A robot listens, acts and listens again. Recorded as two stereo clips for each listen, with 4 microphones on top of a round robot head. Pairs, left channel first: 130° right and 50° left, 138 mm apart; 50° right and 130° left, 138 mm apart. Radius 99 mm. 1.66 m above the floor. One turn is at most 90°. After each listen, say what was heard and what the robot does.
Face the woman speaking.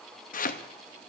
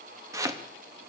Keep listening.
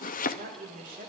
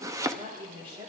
The woman speaking: 75° left. Turn 75° left.
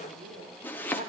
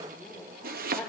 The woman speaking is now 30° left. Turn 30° left.
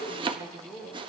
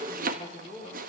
The woman speaking is now 15° right. Turn 15° right.
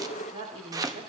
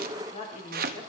Facing the woman speaking, over 4 m away.